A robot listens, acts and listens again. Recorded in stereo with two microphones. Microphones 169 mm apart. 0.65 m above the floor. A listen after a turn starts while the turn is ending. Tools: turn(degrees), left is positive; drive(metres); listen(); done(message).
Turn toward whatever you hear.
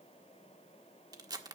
turn(degrees=-20)
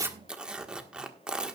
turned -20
done("Found it: tearing paper, straight ahead.")